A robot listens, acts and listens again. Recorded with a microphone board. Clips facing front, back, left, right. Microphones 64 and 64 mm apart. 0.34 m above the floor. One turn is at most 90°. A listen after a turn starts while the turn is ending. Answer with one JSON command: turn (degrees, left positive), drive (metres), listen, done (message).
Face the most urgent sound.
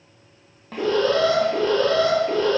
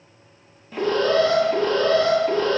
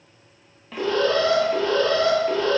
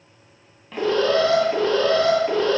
{"turn": -90}
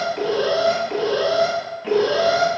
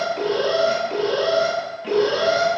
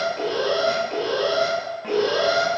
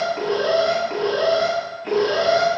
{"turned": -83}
{"turn": -60}
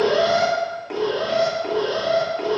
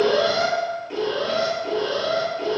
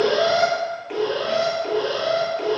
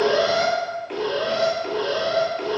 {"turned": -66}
{"done": "Found it: an alarm, straight ahead, 1 to 2 m away."}